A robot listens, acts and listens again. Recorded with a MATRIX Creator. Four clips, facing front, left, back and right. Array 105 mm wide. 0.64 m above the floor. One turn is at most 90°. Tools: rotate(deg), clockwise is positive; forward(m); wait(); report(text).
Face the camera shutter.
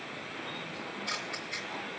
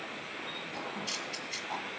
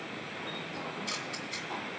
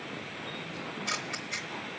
rotate(60)
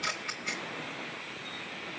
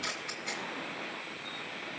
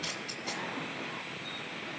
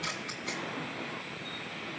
report("Found it: a camera shutter, straight ahead, 1 to 2 m away.")